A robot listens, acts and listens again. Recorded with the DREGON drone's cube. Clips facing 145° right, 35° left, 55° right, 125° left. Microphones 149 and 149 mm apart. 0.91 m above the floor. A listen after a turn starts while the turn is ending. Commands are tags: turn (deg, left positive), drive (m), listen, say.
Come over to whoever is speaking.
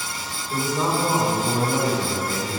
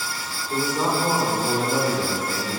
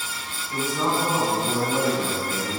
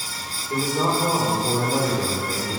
<turn deg="80"/>
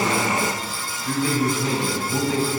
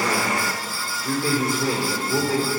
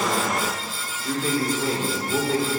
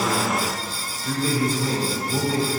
<turn deg="-20"/>
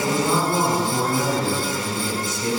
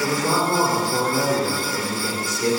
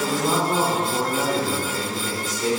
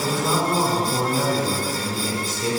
<drive m="1.0"/>
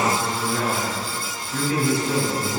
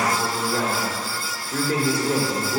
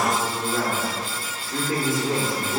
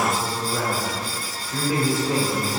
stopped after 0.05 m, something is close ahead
<say>Blocked. The man speaking is further on, straight ahead.</say>